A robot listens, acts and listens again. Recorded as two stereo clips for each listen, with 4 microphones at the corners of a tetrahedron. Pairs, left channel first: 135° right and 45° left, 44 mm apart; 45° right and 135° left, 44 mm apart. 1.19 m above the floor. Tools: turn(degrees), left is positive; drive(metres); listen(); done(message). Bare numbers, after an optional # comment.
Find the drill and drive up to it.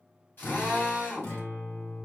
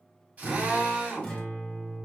# The drill: 170° right.
turn(-170)
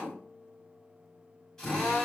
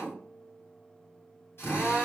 # The drill is now 60° right.
turn(-60)
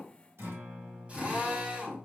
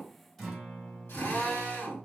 # The drill is now 20° right.
turn(-20)
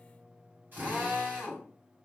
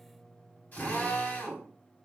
drive(1.0)
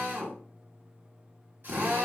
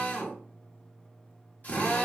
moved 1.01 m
# The drill is now 10° left.
turn(10)
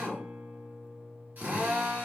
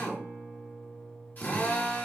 drive(1.0)
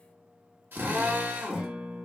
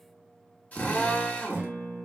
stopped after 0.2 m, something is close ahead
# The drill is now 10° left.
turn(10)
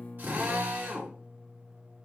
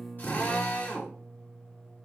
done("Arrived at the drill, straight ahead.")